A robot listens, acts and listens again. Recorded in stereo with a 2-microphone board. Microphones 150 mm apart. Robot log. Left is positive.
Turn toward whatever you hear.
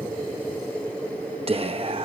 note: The whispering: about 40° right or 140° right.
cmd yaw -40
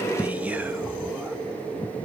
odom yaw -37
note: So it is at 10° right.
cmd yaw -10
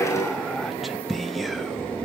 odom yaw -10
end: Facing the whispering, under 1 m away.